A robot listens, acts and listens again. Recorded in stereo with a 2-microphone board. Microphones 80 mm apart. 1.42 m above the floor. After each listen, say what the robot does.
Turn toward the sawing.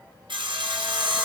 Turn 90° right.
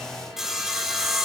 Facing the sawing, 1 to 2 m away.